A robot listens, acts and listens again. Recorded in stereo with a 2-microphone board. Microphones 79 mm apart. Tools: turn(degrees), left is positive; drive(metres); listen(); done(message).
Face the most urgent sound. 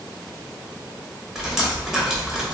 listen()
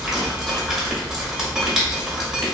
listen()
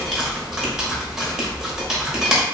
done("I can't make out anything urgent to turn to.")